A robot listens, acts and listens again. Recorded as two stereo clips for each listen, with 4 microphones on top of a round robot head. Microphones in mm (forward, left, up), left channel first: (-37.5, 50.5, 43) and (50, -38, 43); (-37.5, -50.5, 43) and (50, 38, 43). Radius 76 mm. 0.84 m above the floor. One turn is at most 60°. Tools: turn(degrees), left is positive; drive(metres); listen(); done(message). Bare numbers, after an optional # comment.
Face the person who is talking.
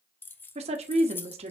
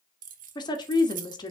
# The woman speaking: 80° right.
turn(-60)
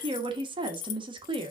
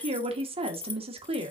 done("Found it: a woman speaking, straight ahead.")